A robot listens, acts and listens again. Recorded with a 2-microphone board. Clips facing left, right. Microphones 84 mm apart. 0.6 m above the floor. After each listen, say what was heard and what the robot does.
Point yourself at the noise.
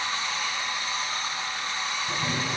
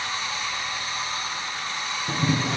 Turn 90° right.
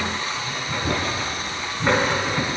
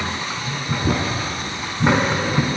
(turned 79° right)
So it is at 15° right. Turn 15° right.
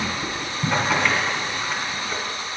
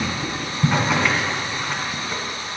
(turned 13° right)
Facing the boiling.